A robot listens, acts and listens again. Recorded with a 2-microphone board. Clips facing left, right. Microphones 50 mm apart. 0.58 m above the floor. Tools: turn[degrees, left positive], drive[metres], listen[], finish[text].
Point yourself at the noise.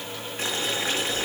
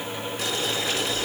Thought: The boiling: about 35° left or 145° left.
Action: turn[35]
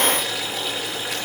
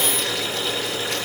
Action: finish[Facing the boiling, over 4 m away.]